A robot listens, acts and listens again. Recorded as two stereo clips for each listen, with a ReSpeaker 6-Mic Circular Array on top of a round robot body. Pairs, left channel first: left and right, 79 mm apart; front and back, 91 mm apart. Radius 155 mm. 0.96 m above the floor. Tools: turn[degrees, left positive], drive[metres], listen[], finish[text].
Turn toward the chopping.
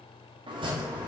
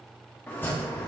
Thought: The chopping: 70° right.
Action: turn[-70]
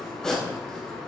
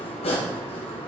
Thought: The chopping is now 10° left.
Action: turn[10]
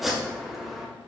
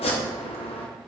Action: finish[Found it: chopping, straight ahead, under 1 m away.]